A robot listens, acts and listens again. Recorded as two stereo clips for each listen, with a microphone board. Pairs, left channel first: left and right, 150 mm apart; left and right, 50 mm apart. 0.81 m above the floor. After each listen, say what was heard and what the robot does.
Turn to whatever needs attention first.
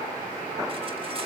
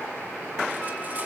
Keep listening.
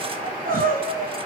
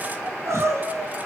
The crying: about 70° right or 110° right. Turn 70° right.
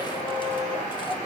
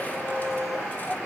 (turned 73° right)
Keep listening.
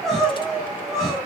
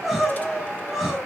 Found it: crying, straight ahead, over 4 m away.